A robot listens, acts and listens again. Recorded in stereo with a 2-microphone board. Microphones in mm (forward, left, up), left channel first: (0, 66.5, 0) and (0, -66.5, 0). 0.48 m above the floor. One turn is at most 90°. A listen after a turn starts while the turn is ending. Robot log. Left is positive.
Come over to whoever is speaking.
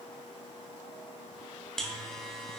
cmd idle
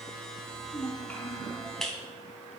note: The child speaking: about 15° left or 165° left.
cmd yaw +15
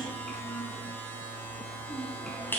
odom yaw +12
cmd fwd 1.0
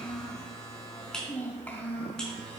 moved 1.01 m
note: The child speaking is now 10° left.
cmd yaw +10
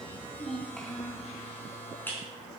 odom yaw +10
cmd fwd 1.0
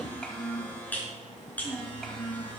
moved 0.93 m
cmd fwd 1.0
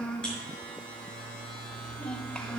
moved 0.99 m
note: The child speaking is now 10° left.
cmd yaw +10
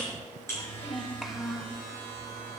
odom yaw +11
cmd fwd 1.0
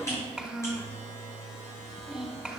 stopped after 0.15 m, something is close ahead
end: I am next to the child speaking.